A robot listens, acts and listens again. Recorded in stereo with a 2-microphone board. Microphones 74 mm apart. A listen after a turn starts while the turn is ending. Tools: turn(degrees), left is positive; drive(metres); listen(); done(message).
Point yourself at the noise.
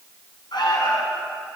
turn(degrees=90)
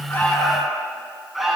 done("Facing the alarm.")